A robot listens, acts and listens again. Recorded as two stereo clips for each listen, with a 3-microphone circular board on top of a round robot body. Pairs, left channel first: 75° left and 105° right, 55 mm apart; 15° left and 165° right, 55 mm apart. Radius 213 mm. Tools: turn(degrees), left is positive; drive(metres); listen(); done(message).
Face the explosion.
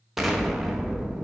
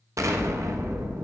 turn(degrees=170)
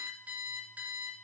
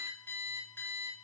done("I heard an explosion from this way, but can't make it out now.")